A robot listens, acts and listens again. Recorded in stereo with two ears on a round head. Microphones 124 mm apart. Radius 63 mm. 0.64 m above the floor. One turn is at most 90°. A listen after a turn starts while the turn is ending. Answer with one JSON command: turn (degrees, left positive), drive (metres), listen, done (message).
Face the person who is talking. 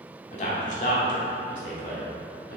{"turn": 60}
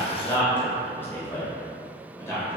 {"turn": 20}
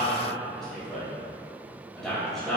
{"done": "Found it: a man speaking, straight ahead."}